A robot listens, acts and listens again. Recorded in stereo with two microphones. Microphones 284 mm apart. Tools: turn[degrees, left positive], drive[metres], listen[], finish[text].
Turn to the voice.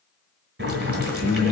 Action: turn[30]
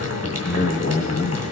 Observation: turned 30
Thought: So it is at 135° left.
Action: turn[135]
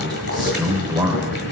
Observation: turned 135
Thought: The man speaking is now 15° right.
Action: turn[-15]
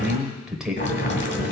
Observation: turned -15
Action: finish[Facing the man speaking.]